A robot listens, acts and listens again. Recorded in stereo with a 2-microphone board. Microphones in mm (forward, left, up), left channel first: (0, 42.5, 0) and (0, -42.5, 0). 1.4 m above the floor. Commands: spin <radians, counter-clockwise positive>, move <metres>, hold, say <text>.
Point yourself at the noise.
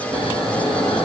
spin 1.57
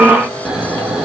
spin -0.17
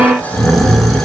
say Facing the snoring, 2 to 4 m away.